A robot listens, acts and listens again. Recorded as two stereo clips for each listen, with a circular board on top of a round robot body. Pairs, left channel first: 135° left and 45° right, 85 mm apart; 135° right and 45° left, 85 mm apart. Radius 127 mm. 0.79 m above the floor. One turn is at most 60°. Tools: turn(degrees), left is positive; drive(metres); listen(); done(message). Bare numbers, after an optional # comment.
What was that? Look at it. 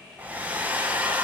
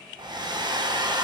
# The hair dryer: 25° left.
turn(25)
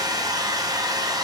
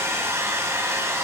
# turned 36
# The hair dryer is now 10° right.
turn(-10)
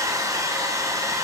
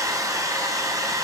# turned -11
done("Facing the hair dryer, under 1 m away.")